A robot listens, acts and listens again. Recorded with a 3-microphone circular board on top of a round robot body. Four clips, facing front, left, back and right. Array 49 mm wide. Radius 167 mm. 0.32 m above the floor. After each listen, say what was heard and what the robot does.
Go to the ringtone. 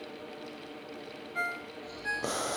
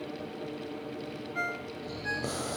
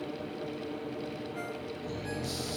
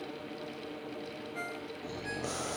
The ringtone: 35° left. Turn 35° left.
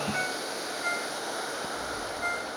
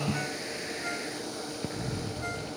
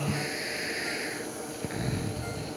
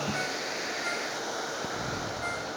Keep listening.
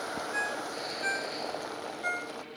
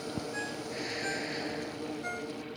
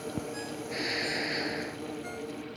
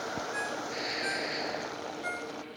Drive 1.0 m forward.
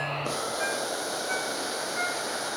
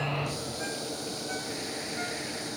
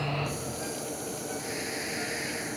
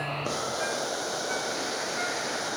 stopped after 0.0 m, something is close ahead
Keep listening.
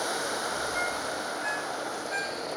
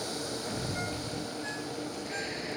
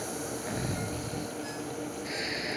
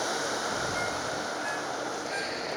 Keep listening.
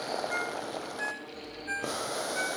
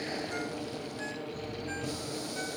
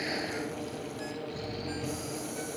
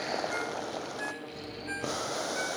The ringtone is now 10° right. Turn 10° right.
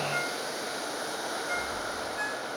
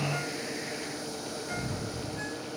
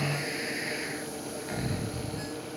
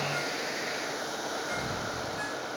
Keep listening.
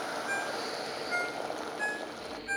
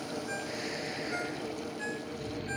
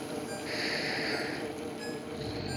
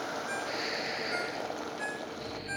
Something is in my way. I am facing the ringtone but have not reached it.